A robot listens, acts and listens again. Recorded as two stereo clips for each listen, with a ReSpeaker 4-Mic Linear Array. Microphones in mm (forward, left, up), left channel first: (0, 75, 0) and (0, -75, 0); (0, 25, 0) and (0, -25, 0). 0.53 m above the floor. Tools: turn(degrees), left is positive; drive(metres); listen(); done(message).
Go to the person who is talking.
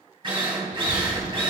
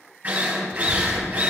turn(degrees=45)
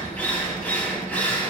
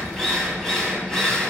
turn(degrees=90)
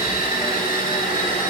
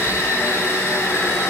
drive(metres=1.0)
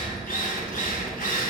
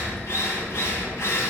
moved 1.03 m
turn(degrees=15)
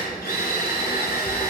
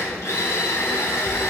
drive(metres=1.0)
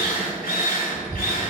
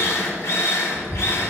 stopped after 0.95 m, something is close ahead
done("I am next to the child speaking.")